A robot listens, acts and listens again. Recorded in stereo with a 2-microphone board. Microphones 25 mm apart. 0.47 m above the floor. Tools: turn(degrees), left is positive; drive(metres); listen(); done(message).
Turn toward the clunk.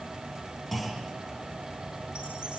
turn(degrees=30)
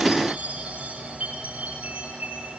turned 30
listen()
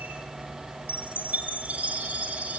done("I heard a clunk, but can't make it out now. It was about 20° right or 140° left.")